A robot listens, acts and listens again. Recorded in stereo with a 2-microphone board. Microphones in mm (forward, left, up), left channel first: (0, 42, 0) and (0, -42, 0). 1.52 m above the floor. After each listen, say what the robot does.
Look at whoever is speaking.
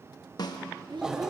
Turn 65° right.
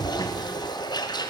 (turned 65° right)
Keep listening.
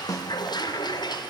Keep listening.
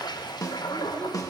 I heard a child speaking, but can't make it out now. It was about straight ahead or 50° right.